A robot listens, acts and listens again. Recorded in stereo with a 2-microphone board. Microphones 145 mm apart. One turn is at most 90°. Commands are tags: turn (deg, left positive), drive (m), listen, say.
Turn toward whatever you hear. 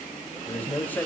<turn deg="30"/>
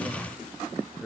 <turn deg="30"/>
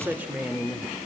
<say>Found it: a man speaking, straight ahead, 1 to 2 m away.</say>